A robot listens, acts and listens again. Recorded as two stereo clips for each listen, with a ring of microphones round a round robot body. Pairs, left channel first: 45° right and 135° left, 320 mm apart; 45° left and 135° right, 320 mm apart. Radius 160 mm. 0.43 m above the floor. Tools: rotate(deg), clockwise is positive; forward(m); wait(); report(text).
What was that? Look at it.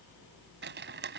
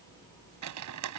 rotate(170)
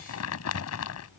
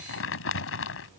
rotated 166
report("Found it: crumpling, straight ahead.")